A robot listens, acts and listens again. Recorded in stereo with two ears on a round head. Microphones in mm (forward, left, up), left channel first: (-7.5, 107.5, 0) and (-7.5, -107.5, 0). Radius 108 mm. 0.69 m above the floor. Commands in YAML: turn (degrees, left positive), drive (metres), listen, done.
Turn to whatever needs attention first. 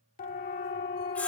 turn: 35
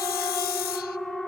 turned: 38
done: "Found it: a siren, straight ahead, 2 to 4 m away."